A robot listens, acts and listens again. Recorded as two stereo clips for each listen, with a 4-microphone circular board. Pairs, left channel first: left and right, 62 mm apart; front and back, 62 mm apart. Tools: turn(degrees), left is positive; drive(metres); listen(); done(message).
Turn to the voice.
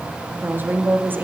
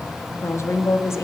turn(degrees=-35)
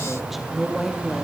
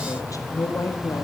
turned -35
done("Facing the woman speaking.")